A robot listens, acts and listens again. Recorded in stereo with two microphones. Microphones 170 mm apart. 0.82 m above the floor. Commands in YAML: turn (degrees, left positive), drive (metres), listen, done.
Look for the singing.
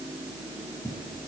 listen: true
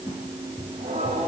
turn: -35
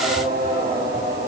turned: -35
turn: -110
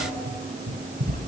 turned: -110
listen: true
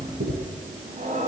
turn: -50
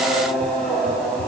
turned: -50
done: "Found it: singing, straight ahead, over 4 m away."